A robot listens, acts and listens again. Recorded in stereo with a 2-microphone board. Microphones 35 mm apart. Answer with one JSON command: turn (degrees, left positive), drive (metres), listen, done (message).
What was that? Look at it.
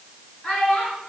{"turn": 30}
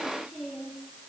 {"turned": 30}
{"turn": -10}
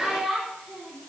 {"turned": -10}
{"done": "Facing the child speaking."}